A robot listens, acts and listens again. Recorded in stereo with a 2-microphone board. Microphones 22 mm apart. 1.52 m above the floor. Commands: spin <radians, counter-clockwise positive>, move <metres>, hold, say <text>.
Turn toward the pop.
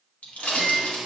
spin 1.57
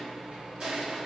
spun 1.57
say Facing where the pop came from. I can't hear it now.